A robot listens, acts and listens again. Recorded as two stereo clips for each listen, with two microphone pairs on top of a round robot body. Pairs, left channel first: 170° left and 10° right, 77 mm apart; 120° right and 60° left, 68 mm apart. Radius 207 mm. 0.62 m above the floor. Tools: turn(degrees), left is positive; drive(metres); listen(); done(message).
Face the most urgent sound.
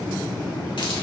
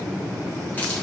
listen()
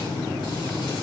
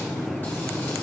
listen()
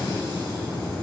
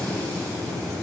done("I can't make out anything urgent.")